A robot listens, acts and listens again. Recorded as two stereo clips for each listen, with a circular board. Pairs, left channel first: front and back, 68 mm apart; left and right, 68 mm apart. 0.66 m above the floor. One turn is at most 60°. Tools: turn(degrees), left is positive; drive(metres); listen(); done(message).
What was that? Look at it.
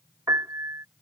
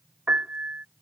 turn(degrees=-60)
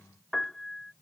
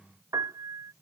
turn(degrees=-60)
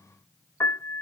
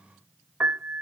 turn(degrees=-35)
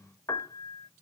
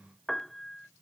done("Facing the piano.")